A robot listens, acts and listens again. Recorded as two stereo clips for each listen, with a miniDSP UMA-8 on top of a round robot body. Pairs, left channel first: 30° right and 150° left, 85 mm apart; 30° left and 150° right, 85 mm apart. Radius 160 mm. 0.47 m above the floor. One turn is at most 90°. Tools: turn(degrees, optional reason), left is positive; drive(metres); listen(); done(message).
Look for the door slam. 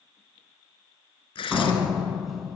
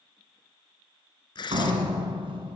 turn(degrees=-90, reason="The door slam: 125° right.")
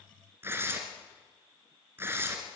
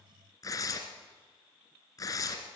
turn(degrees=-35, reason="Nothing new. It was at 35° right.")
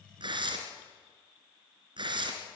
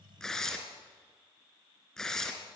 done("Facing where the door slam came from. I can't hear it now.")